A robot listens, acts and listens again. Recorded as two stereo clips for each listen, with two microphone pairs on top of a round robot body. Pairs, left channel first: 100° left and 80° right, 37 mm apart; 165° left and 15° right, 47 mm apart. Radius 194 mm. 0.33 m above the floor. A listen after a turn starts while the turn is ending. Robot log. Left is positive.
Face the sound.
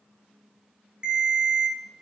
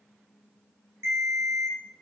note: The ringtone: 20° right.
cmd yaw -20
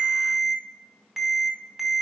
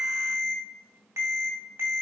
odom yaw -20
end: Facing the ringtone, 2 to 4 m away.